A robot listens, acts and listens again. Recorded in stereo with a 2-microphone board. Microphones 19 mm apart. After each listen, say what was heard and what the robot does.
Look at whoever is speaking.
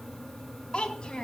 The child speaking: about 50° left or 130° left. Turn 50° left.
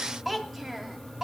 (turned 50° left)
So it is at 10° right. Turn 10° right.
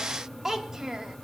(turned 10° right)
The child speaking is now 30° right. Turn 30° right.
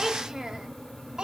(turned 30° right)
The child speaking is now 45° right. Turn 45° right.
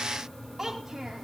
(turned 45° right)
The child speaking is now 15° right. Turn 15° right.
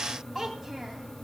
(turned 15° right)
The child speaking is now 10° right. Turn 10° right.
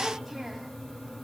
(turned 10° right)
Keep listening.
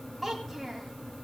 Found it: a child speaking, straight ahead.